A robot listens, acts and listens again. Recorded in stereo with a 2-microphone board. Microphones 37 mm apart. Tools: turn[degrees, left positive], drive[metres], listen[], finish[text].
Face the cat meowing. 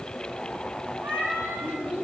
Thought: The cat meowing: about 70° right or 110° right.
Action: turn[-70]
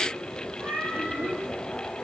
Thought: So it is at 45° right.
Action: turn[-45]
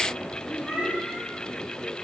Action: finish[Found it: a cat meowing, straight ahead.]